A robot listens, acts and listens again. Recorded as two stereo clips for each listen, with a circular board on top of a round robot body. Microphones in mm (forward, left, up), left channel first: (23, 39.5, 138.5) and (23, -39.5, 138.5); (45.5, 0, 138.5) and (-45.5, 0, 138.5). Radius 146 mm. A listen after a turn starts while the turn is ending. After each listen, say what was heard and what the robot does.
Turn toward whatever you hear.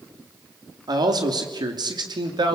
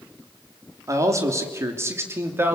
The man speaking: 110° right. Turn 110° right.
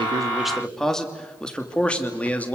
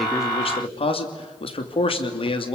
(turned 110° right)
The man speaking is now 20° left. Turn 20° left.
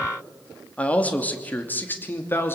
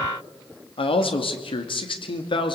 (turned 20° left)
The man speaking is now 30° left. Turn 30° left.
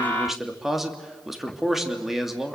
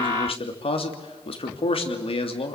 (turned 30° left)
Found it: a man speaking, straight ahead.